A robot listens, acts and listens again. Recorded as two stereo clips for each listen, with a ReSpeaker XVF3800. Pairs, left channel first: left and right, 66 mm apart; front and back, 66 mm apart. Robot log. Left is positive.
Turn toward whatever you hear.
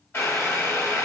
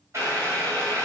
note: The boiling: 140° left.
cmd yaw +140
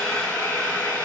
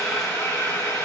note: The boiling is now 30° left.
cmd yaw +30
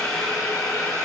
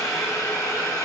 note: The boiling is now 15° left.
cmd yaw +15
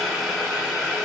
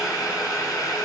end: Facing the boiling, 1 to 2 m away.